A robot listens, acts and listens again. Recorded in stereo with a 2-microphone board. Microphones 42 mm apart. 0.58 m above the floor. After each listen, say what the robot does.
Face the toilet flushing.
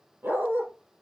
Keep listening.
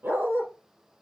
Keep listening.
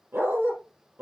I can't make out a toilet flushing to turn to.